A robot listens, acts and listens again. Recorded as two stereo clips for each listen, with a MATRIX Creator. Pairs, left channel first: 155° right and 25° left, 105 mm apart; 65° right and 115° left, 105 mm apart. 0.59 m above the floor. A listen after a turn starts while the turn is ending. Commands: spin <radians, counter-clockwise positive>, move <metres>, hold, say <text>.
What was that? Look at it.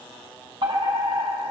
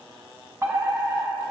spin 0.87
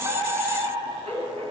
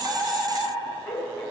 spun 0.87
say Found it: a fire alarm, straight ahead, over 4 m away.